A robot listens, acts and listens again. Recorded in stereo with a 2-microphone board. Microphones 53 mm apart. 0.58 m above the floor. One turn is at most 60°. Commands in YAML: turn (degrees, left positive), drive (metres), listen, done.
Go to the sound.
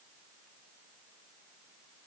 listen: true
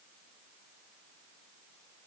listen: true
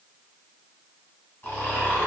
turn: 45
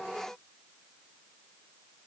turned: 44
listen: true
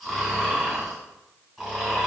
drive: 1.0
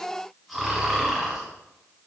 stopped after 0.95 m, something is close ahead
turn: 10
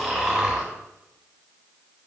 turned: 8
done: "I am next to the snoring."